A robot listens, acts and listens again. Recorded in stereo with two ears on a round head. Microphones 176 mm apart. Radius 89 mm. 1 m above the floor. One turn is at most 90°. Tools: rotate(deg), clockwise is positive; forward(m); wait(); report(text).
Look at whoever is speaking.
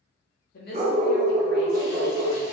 rotate(-50)
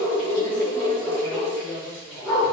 rotate(-10)
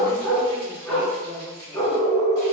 report("Facing the woman speaking, under 1 m away.")